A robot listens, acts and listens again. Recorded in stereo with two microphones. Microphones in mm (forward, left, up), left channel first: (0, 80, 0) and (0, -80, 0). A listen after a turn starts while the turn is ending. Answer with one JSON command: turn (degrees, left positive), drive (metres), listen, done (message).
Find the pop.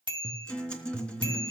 {"listen": true}
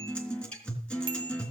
{"listen": true}
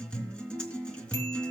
{"done": "I can't make out a pop to turn to."}